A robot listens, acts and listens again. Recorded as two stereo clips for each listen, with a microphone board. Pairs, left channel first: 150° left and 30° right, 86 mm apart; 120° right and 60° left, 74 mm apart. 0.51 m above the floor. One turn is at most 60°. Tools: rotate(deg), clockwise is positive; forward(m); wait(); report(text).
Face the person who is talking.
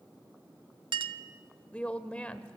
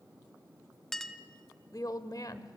rotate(60)
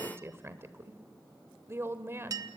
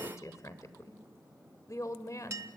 rotate(60)
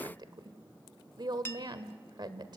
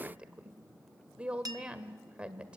rotate(10)
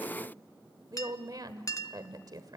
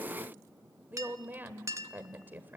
report("Facing the woman speaking, 1 to 2 m away.")